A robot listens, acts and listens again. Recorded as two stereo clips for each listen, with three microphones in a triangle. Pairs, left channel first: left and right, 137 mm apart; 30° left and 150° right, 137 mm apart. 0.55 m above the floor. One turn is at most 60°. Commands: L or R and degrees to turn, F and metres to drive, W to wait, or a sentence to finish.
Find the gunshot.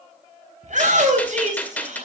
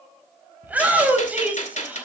L15
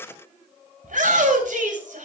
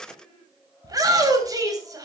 Facing where the gunshot came from. I can't hear it now.